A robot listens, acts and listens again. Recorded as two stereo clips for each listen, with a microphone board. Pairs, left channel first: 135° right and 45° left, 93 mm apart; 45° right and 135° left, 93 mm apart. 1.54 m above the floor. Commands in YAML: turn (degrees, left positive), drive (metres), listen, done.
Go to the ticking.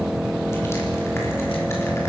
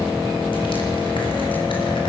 listen: true
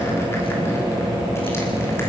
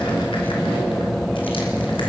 listen: true
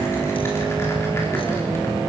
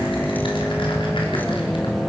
done: "I can't make out ticking."